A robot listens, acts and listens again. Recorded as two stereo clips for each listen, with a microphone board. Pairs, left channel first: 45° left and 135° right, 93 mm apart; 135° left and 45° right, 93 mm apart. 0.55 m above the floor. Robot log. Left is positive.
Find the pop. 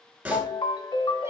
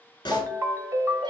note: The pop: 160° left.
cmd yaw +160
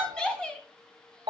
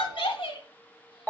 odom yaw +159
end: I heard a pop from this way, but can't make it out now.